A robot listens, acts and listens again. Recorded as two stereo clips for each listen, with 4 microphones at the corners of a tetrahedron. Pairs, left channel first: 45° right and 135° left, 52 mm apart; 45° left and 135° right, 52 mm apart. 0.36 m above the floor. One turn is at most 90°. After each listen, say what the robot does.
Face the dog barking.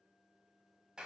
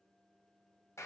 Keep listening.
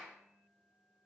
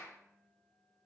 Keep listening.
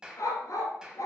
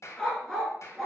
Turn 40° right.
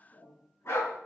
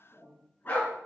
Turn 10° right.
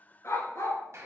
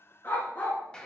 Turn 15° right.
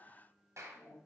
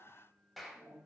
Keep listening.
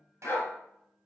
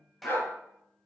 Facing the dog barking.